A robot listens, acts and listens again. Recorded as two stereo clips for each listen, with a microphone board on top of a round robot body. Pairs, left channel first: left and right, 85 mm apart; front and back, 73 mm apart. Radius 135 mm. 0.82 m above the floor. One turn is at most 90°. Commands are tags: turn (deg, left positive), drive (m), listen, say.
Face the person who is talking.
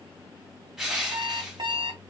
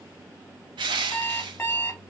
<listen/>
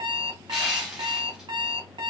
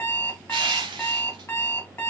<listen/>
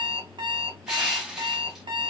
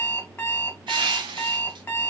<say>I can't make out anyone speaking to turn to.</say>